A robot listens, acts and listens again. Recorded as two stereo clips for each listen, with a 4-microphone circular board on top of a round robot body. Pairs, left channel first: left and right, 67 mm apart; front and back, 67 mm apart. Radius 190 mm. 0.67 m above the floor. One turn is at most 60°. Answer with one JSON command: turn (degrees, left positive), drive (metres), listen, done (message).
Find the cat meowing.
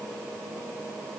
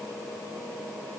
{"listen": true}
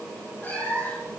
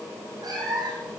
{"turn": 60}
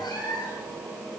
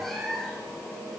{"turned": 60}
{"turn": 60}
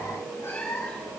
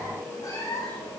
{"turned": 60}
{"turn": 35}
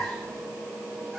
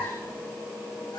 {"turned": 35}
{"done": "Facing the cat meowing."}